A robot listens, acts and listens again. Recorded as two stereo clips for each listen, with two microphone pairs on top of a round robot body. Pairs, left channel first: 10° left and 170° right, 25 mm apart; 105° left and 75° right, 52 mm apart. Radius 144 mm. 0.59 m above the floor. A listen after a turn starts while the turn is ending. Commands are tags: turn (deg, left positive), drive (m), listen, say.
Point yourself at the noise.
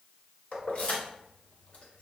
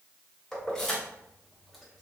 <turn deg="25"/>
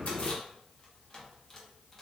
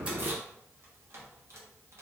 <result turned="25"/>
<listen/>
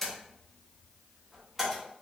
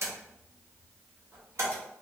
<turn deg="-85"/>
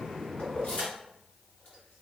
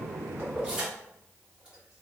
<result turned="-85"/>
<say>Facing the keys jangling, 1 to 2 m away.</say>